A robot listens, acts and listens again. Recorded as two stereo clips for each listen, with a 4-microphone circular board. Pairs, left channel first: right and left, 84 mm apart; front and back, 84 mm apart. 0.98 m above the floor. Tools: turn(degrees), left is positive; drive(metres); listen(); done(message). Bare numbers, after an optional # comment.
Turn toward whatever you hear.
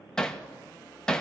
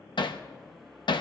# The hammering: 10° right.
turn(-10)
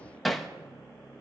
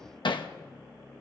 done("Facing the hammering, under 1 m away.")